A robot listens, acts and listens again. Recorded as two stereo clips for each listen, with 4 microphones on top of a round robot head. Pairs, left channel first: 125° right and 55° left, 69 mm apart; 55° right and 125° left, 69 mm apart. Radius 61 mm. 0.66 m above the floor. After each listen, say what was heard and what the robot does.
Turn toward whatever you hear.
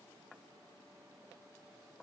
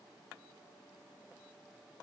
Keep listening.
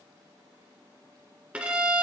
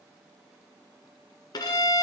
The violin: 20° right. Turn 20° right.
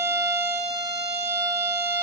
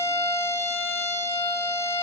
Found it: a violin, straight ahead, 1 to 2 m away.